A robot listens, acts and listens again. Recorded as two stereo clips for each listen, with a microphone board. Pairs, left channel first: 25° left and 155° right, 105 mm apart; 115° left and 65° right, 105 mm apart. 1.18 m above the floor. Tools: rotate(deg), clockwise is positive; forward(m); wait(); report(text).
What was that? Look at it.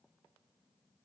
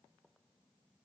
wait()
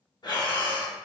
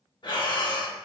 rotate(-70)
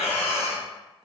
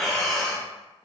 rotate(-25)
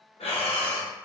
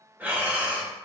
report("Facing the breathing, under 1 m away.")